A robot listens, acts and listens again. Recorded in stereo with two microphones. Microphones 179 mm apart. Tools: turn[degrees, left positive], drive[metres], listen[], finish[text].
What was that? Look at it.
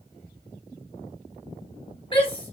Thought: The shout: about 30° left or 150° left.
Action: turn[30]
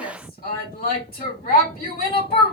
Thought: So it is at 120° left.
Action: turn[120]
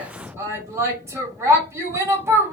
Thought: The shout is now 15° right.
Action: turn[-15]
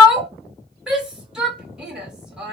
Action: finish[Found it: a shout, straight ahead.]